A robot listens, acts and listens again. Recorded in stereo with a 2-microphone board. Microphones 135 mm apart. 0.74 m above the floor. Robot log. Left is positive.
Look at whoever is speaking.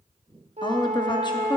note: The woman speaking: about 35° left or 145° left.
cmd yaw +35
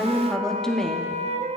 end: Facing the woman speaking, under 1 m away.